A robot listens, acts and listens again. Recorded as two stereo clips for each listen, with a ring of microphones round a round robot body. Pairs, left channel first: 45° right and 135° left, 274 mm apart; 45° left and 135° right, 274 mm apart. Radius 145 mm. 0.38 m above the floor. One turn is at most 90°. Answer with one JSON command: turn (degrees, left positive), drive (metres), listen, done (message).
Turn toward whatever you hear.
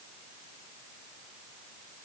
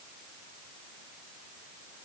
{"listen": true}
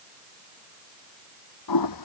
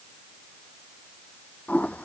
{"turn": -40}
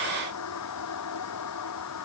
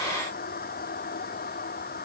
{"turn": -15}
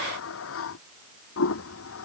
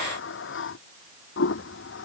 {"done": "Found it: a toilet flushing, straight ahead."}